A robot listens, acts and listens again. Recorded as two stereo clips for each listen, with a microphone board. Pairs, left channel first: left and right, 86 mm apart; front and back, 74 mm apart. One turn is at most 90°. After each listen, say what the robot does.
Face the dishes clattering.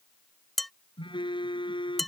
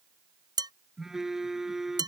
Turn 90° left.
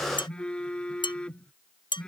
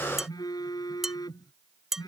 Turn 90° left.
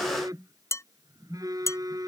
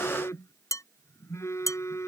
Turn 35° left.
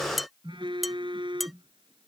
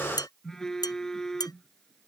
Facing the dishes clattering.